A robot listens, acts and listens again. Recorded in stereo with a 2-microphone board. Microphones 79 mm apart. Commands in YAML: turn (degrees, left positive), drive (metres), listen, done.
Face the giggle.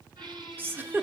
turn: -25
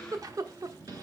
turn: -130
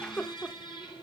turn: 15
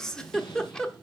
done: "Found it: a giggle, straight ahead."